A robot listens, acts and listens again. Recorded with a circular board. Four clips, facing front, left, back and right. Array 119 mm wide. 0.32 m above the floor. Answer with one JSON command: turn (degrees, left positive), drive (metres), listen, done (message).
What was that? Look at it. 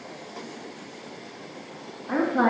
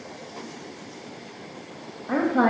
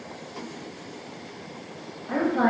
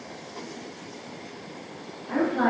{"turn": 80}
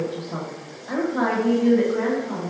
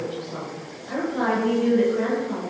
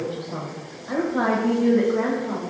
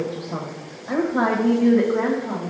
{"turn": -115}
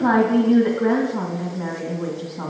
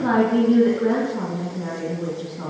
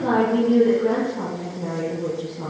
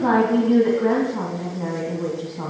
{"turn": -30}
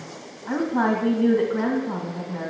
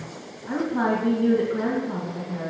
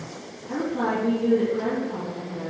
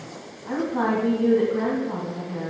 {"turn": -15}
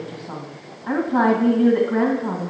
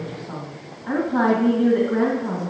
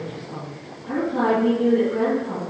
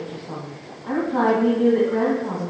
{"done": "Facing the woman speaking, 1 to 2 m away."}